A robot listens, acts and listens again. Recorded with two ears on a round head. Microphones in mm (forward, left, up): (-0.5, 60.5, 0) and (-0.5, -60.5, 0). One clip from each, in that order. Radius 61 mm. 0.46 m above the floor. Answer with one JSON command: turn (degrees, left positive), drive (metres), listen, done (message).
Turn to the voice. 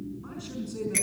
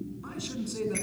{"turn": -35}
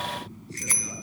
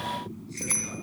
{"listen": true}
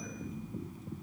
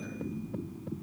{"listen": true}
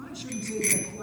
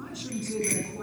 {"done": "Found it: a man speaking, straight ahead."}